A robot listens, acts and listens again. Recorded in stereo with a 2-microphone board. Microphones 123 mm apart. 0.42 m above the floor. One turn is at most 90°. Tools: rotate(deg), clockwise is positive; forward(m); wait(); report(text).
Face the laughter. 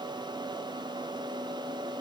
wait()
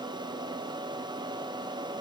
wait()
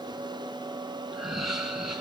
rotate(30)
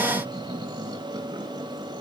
rotate(90)
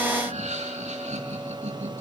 rotate(75)
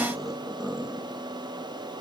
report("Found it: laughter, straight ahead.")